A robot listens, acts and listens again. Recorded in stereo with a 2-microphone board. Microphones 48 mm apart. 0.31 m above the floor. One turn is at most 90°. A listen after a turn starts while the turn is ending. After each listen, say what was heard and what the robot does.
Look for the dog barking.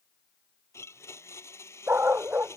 The dog barking: about 50° right or 130° right. Turn 50° right.
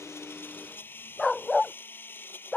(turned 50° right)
So it is at 15° left. Turn 15° left.
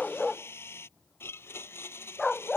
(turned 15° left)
The dog barking is now 15° left. Turn 15° left.
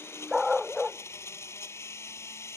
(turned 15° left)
Facing the dog barking.